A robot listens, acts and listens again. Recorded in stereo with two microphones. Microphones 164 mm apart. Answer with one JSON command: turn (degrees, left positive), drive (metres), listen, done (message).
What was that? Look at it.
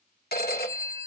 {"turn": 70}
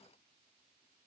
{"listen": true}
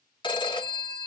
{"turn": 30}
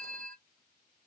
{"done": "Found it: a phone ringing, straight ahead."}